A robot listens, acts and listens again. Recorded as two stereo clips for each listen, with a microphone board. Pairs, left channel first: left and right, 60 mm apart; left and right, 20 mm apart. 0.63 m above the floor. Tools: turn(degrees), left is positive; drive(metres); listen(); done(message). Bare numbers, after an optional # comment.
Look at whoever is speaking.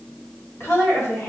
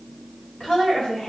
# The woman speaking: about 45° left or 135° left.
turn(45)
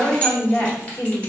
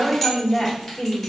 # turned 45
# So it is at 80° left.
turn(80)
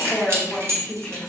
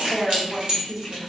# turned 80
# The woman speaking is now 10° left.
turn(10)
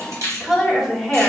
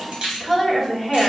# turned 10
done("Facing the woman speaking, 1 to 2 m away.")